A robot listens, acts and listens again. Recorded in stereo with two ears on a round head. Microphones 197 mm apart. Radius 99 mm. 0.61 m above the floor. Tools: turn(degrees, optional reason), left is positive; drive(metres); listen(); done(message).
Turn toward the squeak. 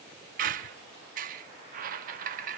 turn(degrees=-40, reason="The squeak: about 40° right or 140° right.")
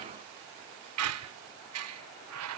turn(degrees=-95, reason="So it is at 95° right.")
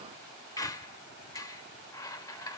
turn(degrees=15, reason="The squeak is now 15° left.")
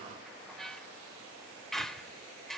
done("Found it: a squeak, straight ahead, under 1 m away.")